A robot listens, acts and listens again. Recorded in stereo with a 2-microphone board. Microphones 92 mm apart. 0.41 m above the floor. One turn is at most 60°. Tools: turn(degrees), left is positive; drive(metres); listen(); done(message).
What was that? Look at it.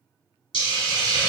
turn(degrees=60)
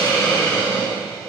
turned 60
turn(degrees=20)
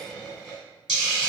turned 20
done("Facing the hiss, 1 to 2 m away.")